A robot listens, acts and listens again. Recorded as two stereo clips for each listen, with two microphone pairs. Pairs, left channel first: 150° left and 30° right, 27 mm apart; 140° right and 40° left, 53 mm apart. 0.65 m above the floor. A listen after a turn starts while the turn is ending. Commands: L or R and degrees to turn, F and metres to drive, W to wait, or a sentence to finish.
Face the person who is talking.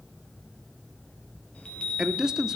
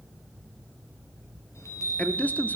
R90
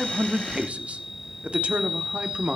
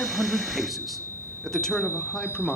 R65
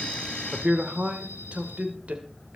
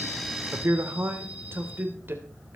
Found it: a man speaking, straight ahead.